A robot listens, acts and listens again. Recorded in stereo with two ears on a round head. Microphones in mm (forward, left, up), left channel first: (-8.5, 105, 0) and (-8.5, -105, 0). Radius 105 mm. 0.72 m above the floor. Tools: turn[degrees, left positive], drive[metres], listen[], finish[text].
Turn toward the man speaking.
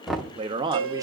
Thought: The man speaking: about 20° right or 160° right.
Action: turn[-20]
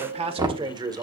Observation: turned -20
Thought: The man speaking: about 15° right or 165° right.
Action: turn[-15]
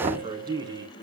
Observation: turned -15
Thought: The man speaking: about 15° right or 165° right.
Action: turn[-15]
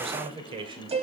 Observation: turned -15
Thought: The man speaking: about 20° right or 160° right.
Action: turn[-20]
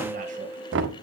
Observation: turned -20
Action: listen[]
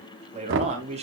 Thought: The man speaking: about 30° right or 150° right.
Action: turn[-30]
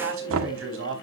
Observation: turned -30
Thought: So it is at 125° right.
Action: turn[-125]
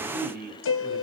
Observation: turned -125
Thought: The man speaking is now 40° right.
Action: turn[-40]
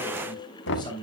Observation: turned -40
Thought: The man speaking is now 20° left.
Action: turn[20]
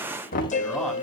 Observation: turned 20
Action: finish[Facing the man speaking, 2 to 4 m away.]